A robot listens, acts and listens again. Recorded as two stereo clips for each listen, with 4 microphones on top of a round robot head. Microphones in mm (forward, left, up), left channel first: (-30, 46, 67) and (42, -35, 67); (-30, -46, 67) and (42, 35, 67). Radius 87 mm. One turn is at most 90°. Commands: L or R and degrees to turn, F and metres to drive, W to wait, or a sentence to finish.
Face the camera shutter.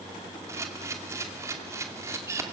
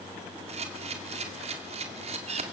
L20
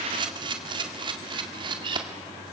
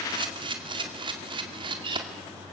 Found it: a camera shutter, straight ahead.